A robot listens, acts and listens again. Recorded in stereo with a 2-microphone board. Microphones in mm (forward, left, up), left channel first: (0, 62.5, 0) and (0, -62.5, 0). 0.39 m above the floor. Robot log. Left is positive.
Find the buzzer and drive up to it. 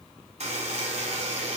note: The buzzer: about 60° right or 120° right.
cmd yaw -60
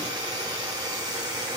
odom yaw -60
note: So it is at 40° right.
cmd yaw -40
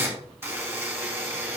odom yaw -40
note: The buzzer is now 20° right.
cmd yaw -20
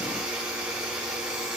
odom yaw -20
cmd fwd 1.0
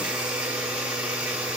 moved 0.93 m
note: The buzzer is now 10° right.
cmd yaw -10
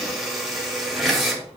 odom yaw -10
cmd fwd 1.0
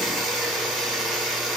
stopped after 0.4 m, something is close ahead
end: Arrived at the buzzer, straight ahead.